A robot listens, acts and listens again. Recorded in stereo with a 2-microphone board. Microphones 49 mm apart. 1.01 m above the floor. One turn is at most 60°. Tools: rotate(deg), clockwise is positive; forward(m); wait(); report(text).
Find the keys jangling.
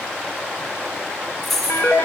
rotate(-30)
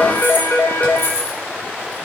rotate(-60)
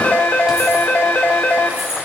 rotate(-60)
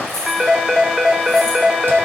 wait()
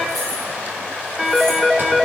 report("I heard keys jangling from this way, but can't make it out now.")